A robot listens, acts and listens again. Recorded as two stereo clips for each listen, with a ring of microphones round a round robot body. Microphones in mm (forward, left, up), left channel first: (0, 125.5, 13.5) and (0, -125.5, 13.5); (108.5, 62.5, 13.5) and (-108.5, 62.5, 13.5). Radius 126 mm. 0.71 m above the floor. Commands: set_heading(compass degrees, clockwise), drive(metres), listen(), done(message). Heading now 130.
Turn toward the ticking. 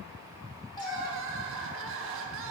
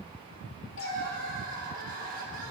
listen()
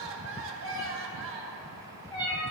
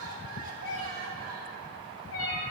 listen()
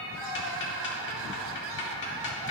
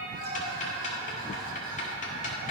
set_heading(80)
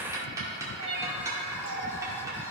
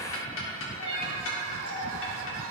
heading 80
set_heading(95)
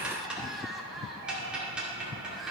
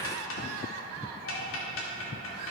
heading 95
done("Found it: ticking, straight ahead, 2 to 4 m away.")